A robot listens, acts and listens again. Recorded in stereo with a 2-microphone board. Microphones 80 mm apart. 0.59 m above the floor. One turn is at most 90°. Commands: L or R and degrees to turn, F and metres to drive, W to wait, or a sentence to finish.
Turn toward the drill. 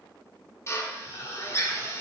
L35
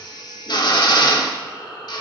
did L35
L90
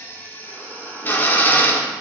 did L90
L25
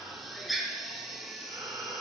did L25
Found it: a drill, straight ahead.